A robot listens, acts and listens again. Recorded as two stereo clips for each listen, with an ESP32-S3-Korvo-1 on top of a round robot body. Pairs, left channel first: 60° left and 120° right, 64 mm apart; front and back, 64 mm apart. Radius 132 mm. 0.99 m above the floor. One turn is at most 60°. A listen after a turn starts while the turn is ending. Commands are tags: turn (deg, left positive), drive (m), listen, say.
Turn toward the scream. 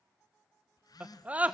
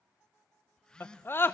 <turn deg="-50"/>
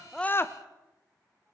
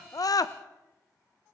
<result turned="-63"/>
<turn deg="10"/>
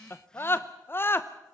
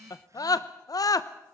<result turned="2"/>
<turn deg="10"/>
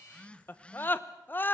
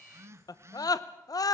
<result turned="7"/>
<say>Facing the scream, under 1 m away.</say>